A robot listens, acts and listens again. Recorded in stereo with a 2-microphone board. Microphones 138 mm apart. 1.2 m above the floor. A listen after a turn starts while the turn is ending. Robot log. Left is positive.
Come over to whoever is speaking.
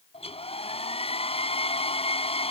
cmd idle
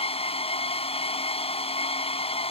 cmd idle
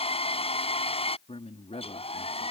note: The man speaking: about 50° left or 130° left.
cmd yaw +50
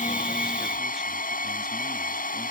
cmd idle
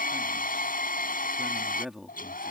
cmd fwd 1.0
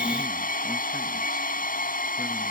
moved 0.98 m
cmd idle
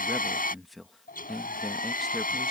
cmd fwd 1.0
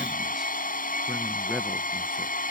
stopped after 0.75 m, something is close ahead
cmd idle
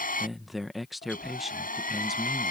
end: I am next to the man speaking.